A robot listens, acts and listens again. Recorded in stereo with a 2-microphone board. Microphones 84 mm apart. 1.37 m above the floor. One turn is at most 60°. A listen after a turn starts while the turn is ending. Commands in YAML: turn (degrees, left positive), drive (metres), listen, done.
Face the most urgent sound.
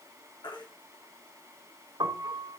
turn: 60
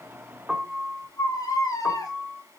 turn: 45
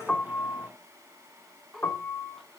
listen: true
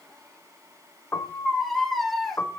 done: "Facing the baby crying."